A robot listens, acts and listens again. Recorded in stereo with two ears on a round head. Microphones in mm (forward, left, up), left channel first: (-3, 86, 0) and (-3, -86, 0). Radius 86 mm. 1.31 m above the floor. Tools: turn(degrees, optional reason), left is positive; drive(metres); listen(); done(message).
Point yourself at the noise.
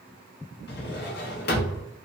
turn(degrees=55, reason="The drawer: about 55° left or 125° left.")
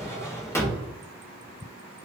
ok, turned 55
turn(degrees=15, reason="So it is at 15° left.")
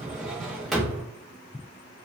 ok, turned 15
done("Facing the drawer, under 1 m away.")